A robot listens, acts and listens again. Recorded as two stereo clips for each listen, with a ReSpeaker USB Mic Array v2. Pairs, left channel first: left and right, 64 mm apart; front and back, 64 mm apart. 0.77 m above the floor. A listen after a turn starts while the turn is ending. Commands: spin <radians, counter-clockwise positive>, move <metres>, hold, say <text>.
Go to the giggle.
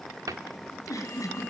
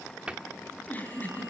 spin 1.05
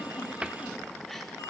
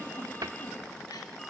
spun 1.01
hold
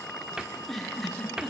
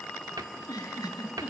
move 1.0
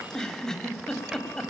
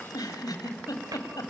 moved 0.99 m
spin 0.17
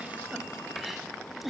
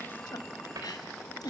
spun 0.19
move 1.0
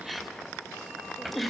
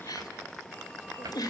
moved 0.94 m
move 1.0
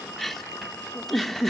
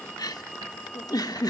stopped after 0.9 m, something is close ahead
say I am next to the giggle.